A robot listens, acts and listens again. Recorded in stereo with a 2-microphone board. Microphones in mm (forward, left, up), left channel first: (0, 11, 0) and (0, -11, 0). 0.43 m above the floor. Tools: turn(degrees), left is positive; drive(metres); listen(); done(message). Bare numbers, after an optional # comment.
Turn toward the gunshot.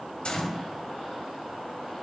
# The gunshot: about 55° left or 125° left.
turn(55)
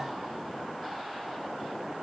listen()
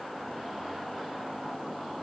done("I heard a gunshot, but can't make it out now. It was about straight ahead or 70° left.")